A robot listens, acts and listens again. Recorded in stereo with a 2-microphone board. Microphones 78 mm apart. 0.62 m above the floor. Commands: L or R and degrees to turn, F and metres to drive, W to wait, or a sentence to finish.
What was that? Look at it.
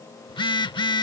L90
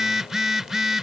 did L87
Facing the phone buzzing.